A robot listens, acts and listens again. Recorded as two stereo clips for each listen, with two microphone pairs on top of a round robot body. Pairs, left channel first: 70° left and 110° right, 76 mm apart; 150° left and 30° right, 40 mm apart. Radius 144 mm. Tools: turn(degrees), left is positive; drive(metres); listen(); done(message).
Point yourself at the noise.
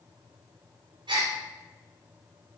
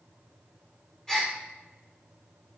turn(degrees=-135)
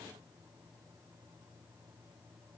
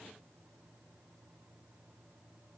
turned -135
done("I heard a gasp from this way, but can't make it out now.")